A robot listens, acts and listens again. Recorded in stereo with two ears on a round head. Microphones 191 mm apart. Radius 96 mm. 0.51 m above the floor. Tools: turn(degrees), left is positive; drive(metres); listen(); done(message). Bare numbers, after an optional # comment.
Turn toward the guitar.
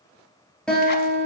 turn(30)
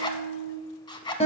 # So it is at 150° left.
turn(150)
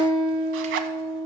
# The guitar is now 15° left.
turn(15)
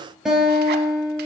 done("Found it: a guitar, straight ahead.")